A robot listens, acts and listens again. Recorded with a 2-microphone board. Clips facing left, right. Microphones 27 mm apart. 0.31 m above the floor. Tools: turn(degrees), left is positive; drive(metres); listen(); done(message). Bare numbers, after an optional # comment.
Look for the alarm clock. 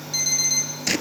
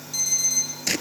# The alarm clock: about 35° left or 145° left.
turn(35)
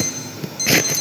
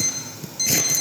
done("Found it: an alarm clock, straight ahead.")